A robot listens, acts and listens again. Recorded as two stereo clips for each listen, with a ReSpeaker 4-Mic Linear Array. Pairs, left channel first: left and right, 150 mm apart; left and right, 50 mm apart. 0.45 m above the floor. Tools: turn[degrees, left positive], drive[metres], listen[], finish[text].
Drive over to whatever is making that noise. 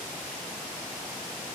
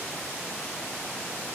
Action: listen[]
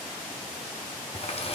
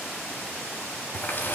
Thought: The running tap: about 40° left or 140° left.
Action: turn[40]
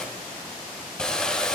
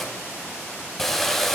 Action: drive[1.0]
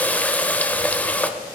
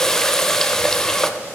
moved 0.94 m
Thought: The running tap is now 10° left.
Action: turn[10]
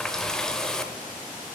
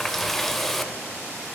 Action: drive[1.0]
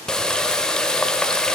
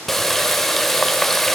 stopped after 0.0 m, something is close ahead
Action: finish[I am next to the running tap.]